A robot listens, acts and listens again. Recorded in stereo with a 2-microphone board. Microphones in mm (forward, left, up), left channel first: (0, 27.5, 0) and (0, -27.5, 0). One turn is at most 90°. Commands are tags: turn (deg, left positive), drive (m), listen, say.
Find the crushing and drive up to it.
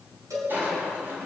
<turn deg="-40"/>
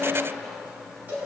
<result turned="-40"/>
<drive m="1.0"/>
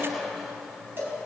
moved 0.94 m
<drive m="1.0"/>
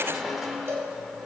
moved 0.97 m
<drive m="1.0"/>
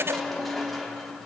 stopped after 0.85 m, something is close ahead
<say>I am next to the crushing.</say>